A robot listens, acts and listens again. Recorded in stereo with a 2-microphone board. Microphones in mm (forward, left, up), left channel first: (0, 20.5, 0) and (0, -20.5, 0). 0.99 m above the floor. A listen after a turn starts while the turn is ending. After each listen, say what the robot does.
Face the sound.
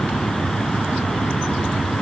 Keep listening.
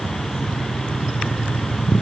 Keep listening.
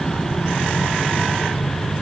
I can't make out anything.